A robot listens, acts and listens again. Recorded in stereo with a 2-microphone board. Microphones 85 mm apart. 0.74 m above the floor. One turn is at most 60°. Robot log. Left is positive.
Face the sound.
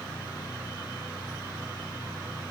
cmd idle
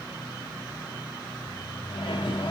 note: The microwave: about 70° left or 110° left.
cmd yaw +60
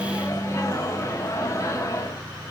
note: So it is at 35° left.
cmd yaw +35
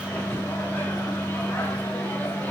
note: The microwave is now 20° left.
cmd yaw +20
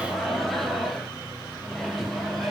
end: Found it: a microwave, straight ahead, under 1 m away.